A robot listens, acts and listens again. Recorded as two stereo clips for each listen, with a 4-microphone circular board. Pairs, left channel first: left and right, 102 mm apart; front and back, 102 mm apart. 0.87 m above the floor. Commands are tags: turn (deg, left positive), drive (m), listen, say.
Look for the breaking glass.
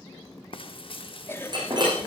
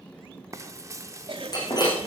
<turn deg="-45"/>
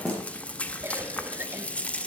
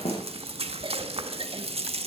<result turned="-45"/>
<say>Found it: breaking glass, straight ahead.</say>